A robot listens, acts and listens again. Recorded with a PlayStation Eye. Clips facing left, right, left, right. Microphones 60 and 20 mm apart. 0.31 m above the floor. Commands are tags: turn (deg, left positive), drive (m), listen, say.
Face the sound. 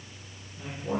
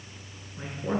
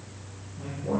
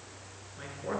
<turn deg="-60"/>
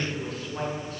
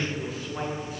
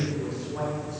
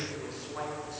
<turn deg="-10"/>
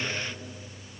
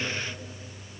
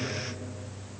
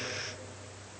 <listen/>
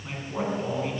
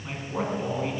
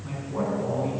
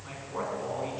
<turn deg="-10"/>
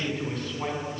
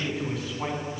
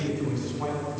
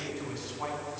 <turn deg="-10"/>
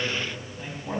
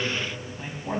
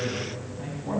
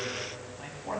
<turn deg="-10"/>
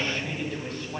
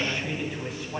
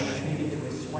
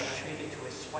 <turn deg="-10"/>
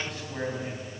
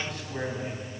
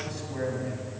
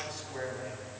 <say>Facing the man speaking.</say>